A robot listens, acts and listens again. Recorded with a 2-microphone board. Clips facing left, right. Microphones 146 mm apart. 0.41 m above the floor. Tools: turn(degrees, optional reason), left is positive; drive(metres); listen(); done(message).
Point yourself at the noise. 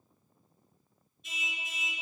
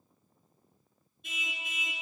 turn(degrees=-60, reason="The car horn: about 60° right or 120° right.")
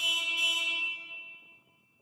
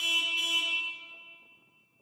turn(degrees=-65, reason="So it is at 65° right.")
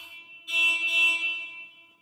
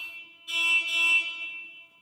done("Facing the car horn, 2 to 4 m away.")